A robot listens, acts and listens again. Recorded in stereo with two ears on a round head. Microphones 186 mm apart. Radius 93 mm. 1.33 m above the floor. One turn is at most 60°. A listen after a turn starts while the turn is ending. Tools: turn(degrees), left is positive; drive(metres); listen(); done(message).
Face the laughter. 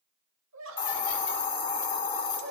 turn(degrees=-60)
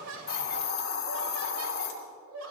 turn(degrees=-60)
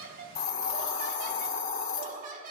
turn(degrees=-40)
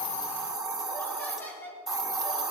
turn(degrees=10)
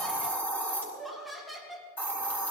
done("Facing the laughter, 2 to 4 m away.")